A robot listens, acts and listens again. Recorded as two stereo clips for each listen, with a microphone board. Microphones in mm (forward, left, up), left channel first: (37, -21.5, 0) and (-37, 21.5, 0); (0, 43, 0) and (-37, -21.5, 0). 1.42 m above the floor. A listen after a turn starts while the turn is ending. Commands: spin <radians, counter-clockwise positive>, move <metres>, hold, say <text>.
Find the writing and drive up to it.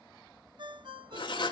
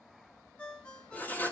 move 1.0
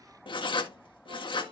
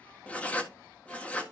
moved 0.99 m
spin -0.26
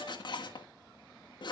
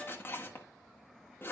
move 1.0
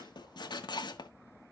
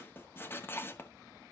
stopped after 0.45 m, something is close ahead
say I am next to the writing.